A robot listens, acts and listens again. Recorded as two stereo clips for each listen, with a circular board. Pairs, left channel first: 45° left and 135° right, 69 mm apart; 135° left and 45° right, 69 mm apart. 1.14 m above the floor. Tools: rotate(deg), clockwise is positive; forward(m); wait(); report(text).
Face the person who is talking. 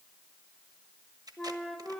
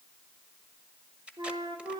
wait()
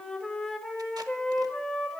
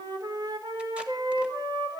wait()
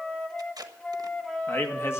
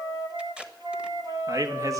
report("Found it: a man speaking, straight ahead.")